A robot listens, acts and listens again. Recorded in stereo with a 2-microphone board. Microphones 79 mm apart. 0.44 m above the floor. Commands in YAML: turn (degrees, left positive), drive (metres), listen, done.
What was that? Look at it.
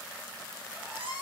turn: -30
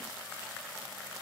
listen: true
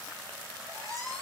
turn: -140
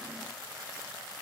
listen: true
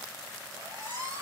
turn: -40
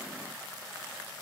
listen: true
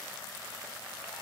listen: true
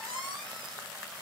done: "Facing the squeak."